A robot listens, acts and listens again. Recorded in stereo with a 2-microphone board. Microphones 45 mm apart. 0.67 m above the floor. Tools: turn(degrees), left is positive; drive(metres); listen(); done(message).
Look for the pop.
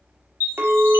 listen()
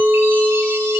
listen()
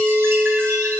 done("I can't make out a pop, only a chime and a clink.")